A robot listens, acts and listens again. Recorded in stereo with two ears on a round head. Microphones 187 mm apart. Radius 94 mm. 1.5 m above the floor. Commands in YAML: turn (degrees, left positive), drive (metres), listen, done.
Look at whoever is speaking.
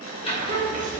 turn: -35
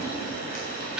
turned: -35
listen: true
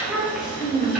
done: "Found it: a child speaking, straight ahead, 1 to 2 m away."